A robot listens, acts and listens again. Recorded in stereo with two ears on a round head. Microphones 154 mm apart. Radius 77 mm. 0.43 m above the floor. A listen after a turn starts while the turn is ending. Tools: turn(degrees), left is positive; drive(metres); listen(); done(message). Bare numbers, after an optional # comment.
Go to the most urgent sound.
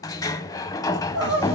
# The crying: about 75° right or 105° right.
turn(-75)
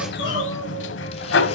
listen()
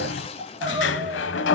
# So it is at 30° right.
turn(-30)
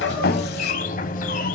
listen()
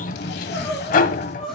drive(1.0)
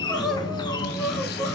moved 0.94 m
drive(1.0)
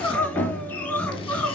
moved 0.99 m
drive(1.0)
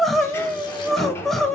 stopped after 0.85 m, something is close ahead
done("I am next to the crying.")